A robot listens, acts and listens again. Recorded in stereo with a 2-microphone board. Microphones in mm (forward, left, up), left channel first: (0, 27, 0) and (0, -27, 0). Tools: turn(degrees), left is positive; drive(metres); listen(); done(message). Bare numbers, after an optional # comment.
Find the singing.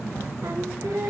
turn(-90)
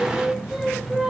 done("Found it: singing, straight ahead.")